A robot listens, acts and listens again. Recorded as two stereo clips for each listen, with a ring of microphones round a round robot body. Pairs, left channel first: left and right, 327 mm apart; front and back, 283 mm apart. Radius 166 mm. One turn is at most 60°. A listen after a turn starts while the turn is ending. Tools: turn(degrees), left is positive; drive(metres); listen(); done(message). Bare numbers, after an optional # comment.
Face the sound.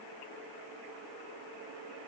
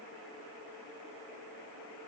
listen()
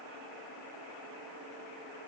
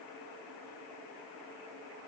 listen()
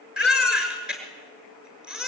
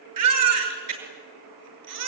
# The baby crying: 175° right.
turn(-60)
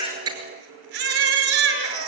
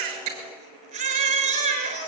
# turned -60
# The baby crying is now 110° right.
turn(-60)
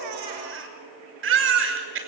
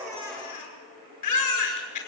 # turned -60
# The baby crying is now 35° right.
turn(-35)
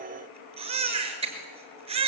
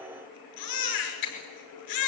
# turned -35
# The baby crying is now 15° right.
turn(-15)
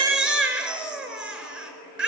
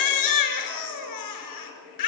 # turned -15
done("Found it: a baby crying, straight ahead.")